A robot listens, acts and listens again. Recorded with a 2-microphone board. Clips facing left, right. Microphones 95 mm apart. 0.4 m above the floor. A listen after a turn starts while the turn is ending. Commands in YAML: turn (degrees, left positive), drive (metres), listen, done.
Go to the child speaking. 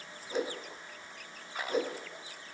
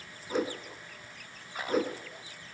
listen: true
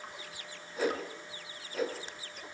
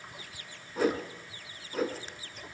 listen: true
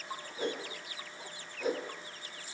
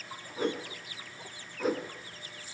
done: "I can't make out a child speaking to turn to."